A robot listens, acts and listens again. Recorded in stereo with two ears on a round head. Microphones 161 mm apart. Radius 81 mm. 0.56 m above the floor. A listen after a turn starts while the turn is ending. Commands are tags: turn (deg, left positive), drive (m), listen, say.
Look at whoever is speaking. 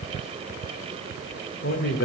<turn deg="55"/>
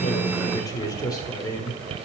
<turn deg="25"/>
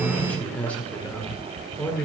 <turn deg="10"/>
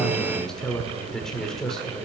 <say>Facing the man speaking.</say>